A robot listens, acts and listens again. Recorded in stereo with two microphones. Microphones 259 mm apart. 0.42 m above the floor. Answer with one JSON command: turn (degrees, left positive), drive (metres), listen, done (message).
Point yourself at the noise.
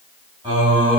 {"turn": -20}
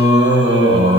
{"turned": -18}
{"turn": -130}
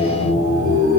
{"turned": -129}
{"turn": 65}
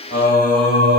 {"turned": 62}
{"turn": 35}
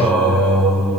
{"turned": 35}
{"done": "Facing the singing."}